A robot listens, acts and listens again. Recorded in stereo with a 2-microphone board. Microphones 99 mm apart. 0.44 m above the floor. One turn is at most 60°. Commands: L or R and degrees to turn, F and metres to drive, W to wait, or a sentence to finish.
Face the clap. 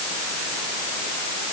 W
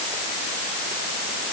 W
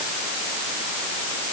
I can't make out a clap.